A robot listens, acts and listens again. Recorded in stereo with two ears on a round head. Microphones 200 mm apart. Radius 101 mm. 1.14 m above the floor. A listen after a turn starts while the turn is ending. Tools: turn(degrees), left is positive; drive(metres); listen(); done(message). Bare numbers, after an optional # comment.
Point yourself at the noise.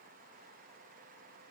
listen()
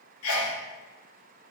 # The sneeze: about 60° left or 120° left.
turn(60)
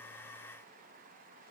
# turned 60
listen()
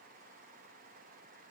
done("I heard a sneeze, but can't make it out now. It was about straight ahead or 60° left.")